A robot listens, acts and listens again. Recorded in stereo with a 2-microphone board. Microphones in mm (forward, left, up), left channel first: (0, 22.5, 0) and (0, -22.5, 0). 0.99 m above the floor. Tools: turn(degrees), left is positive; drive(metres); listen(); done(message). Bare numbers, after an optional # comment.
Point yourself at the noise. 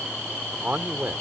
# The man speaking: about 45° right or 135° right.
turn(-45)
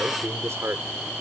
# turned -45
# So it is at 90° right.
turn(-90)
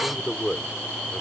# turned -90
done("Found it: a man speaking, straight ahead.")